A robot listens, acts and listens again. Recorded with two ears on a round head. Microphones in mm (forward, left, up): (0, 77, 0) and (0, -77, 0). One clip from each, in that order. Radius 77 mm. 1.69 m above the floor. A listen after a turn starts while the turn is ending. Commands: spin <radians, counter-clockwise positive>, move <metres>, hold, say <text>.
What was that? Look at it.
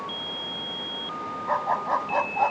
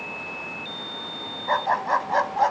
spin -0.96
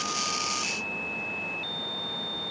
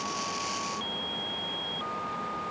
hold
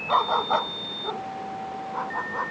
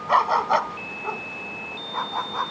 spin -0.87
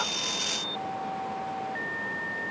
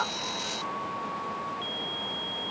hold
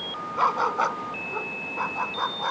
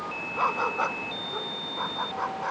spin 0.17
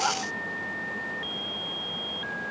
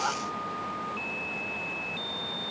hold
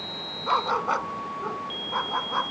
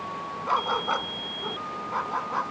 say Found it: a dog barking, straight ahead.